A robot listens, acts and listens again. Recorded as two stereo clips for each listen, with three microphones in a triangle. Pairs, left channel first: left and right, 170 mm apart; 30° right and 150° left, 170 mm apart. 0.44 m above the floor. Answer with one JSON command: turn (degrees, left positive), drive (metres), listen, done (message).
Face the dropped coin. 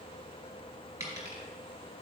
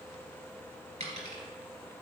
{"turn": -160}
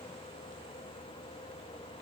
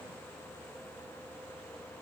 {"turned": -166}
{"done": "I heard a dropped coin from this way, but can't make it out now."}